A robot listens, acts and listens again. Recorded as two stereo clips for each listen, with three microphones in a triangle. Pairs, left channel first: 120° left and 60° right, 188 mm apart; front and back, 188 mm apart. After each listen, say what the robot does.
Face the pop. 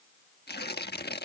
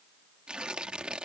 Keep listening.
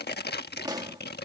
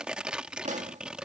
Turn 130° right.
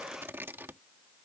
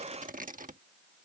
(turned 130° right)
I heard a pop from this way, but can't make it out now.